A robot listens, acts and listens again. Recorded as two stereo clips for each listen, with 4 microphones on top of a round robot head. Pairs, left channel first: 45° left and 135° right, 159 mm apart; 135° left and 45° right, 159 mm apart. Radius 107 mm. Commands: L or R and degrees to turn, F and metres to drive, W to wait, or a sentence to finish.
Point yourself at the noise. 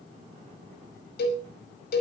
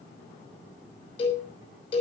L75
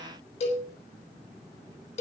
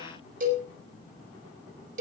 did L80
Found it: a cowbell, straight ahead.